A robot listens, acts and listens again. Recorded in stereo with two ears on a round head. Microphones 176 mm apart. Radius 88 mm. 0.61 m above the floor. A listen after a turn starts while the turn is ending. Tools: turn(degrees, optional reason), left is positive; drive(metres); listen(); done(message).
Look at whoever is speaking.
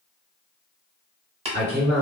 turn(degrees=-55, reason="The man speaking: about 55° right or 125° right.")
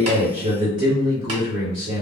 turn(degrees=-25, reason="So it is at 25° right.")
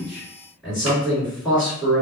done("Facing the man speaking.")